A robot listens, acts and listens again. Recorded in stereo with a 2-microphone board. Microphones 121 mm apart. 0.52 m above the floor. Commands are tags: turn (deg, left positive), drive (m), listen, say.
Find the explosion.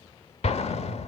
<turn deg="60"/>
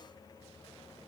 <listen/>
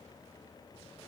<say>I heard an explosion, but can't make it out now. It was about straight ahead or 60° left.</say>